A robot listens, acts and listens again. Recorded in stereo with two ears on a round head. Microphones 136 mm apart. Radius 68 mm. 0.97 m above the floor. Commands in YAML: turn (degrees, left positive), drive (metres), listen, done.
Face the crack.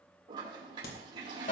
turn: 75
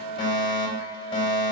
listen: true
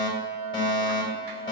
done: "I heard a crack, but can't make it out now. It was about straight ahead or 30° left."